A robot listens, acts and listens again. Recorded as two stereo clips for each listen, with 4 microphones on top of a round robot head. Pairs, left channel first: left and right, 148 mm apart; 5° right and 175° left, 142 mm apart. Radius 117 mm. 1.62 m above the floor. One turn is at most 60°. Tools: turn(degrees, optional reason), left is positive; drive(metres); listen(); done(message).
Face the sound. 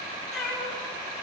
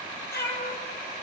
done("Facing the cat meowing, over 4 m away.")